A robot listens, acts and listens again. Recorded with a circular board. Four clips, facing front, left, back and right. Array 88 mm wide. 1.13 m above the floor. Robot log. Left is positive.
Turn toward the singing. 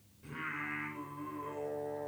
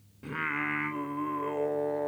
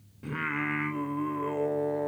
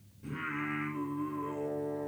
note: The singing: 125° left.
cmd yaw +125
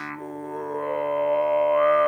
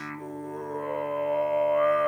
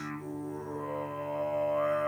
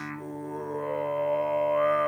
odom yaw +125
end: Facing the singing.